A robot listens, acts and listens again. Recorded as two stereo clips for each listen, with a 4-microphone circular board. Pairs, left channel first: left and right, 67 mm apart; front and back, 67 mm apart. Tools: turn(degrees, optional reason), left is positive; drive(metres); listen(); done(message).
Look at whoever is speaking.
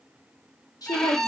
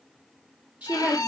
turn(degrees=110, reason="The woman speaking: 110° left.")
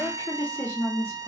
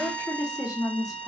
turn(degrees=35, reason="The woman speaking is now 35° left.")
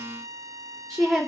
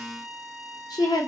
done("Facing the woman speaking.")